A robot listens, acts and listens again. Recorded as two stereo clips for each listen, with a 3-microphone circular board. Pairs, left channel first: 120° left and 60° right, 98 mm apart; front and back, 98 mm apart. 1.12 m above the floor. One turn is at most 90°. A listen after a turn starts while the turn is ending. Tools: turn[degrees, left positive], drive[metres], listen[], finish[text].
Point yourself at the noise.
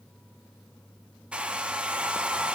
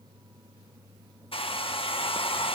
Thought: The hair dryer: 20° left.
Action: turn[20]
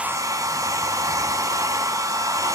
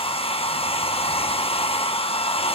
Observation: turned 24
Action: finish[Found it: a hair dryer, straight ahead, 1 to 2 m away.]